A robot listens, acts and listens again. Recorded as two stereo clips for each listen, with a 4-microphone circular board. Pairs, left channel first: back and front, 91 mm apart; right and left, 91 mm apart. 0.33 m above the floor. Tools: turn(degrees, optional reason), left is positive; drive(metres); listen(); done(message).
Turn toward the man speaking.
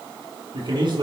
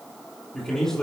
done("Facing the man speaking.")